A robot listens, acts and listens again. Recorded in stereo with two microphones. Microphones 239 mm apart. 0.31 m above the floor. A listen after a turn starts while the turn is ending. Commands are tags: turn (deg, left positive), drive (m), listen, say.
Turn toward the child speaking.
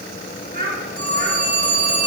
<turn deg="-40"/>
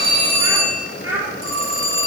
<turn deg="-10"/>
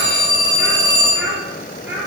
<turn deg="-10"/>
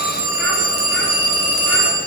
<listen/>
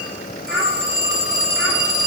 <listen/>
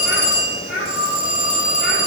<say>Facing the child speaking, over 4 m away.</say>